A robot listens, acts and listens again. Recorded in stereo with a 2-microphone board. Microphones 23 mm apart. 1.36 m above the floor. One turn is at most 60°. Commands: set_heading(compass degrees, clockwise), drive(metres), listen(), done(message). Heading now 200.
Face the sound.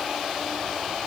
listen()
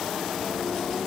listen()
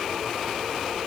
done("I can't make out anything.")